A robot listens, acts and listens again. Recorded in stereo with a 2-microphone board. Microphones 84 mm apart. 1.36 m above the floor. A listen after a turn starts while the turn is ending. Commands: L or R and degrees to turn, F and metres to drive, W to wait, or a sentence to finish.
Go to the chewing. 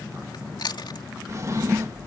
L65
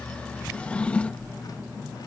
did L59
W
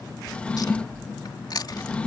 L55
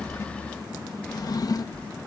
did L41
L15
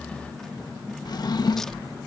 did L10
W
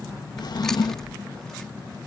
Facing where the chewing came from. I can't hear it now. I did not reach it.